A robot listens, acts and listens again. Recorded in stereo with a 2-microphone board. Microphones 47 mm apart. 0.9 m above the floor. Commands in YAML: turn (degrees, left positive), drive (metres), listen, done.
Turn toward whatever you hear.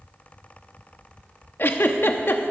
turn: 50
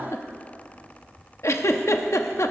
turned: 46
turn: 85
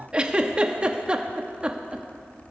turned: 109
turn: -20
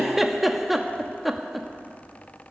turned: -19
done: "Found it: a giggle, straight ahead."